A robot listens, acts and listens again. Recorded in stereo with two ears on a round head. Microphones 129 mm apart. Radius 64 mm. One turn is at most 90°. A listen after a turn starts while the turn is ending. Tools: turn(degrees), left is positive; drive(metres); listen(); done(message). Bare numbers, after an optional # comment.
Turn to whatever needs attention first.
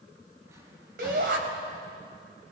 # The shout: about 70° right or 110° right.
turn(-70)
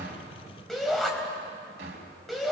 done("Facing the shout, over 4 m away.")